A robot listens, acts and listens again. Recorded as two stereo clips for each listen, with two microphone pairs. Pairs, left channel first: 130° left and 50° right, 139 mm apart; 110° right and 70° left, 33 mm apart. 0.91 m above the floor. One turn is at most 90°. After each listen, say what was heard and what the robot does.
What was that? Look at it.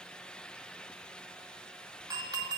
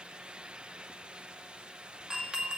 The doorbell: 10° left. Turn 10° left.
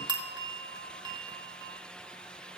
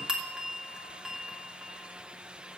Facing the doorbell.